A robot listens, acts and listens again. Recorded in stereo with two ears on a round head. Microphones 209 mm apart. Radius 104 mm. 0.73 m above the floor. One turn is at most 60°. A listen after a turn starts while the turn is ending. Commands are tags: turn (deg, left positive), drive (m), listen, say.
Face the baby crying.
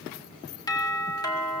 <listen/>
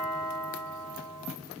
<listen/>
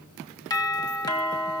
<say>I can't make out a baby crying to turn to.</say>